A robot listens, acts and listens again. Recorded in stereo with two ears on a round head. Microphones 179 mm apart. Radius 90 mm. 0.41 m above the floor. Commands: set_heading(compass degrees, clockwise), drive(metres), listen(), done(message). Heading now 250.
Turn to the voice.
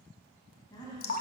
set_heading(230)
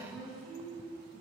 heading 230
done("Facing the woman speaking.")